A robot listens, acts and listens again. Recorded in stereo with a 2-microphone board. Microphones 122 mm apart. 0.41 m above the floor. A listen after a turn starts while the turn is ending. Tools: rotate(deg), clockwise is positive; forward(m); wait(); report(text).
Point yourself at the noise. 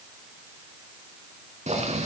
rotate(75)
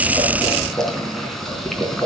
report("Facing the boiling.")